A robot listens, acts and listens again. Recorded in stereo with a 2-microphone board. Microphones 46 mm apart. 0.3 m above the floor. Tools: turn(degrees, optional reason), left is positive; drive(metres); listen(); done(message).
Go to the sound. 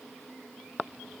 listen()
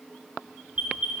turn(degrees=-30, reason="The alarm: about 30° right or 150° right.")
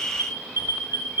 turn(degrees=-115, reason="So it is at 115° right.")
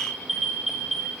drive(metres=1.0)
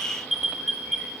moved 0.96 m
turn(degrees=-10, reason="The alarm is now 10° right.")
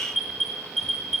drive(metres=1.0)
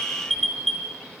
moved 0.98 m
drive(metres=1.0)
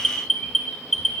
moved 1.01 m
turn(degrees=10, reason="The alarm is now 10° left.")
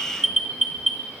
drive(metres=1.0)
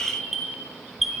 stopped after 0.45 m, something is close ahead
done("Arrived at the alarm, straight ahead.")